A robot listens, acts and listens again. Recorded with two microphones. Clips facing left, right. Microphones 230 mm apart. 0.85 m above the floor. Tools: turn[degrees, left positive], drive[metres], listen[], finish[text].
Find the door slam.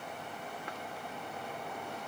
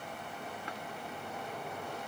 Action: listen[]
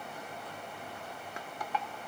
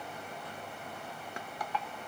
Action: listen[]
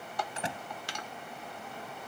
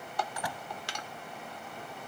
Thought: The door slam: about 25° left or 155° left.
Action: turn[25]
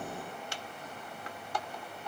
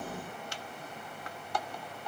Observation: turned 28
Action: listen[]
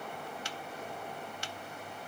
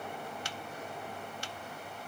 Action: finish[I heard a door slam, but can't make it out now. It was about 5° right or 125° left.]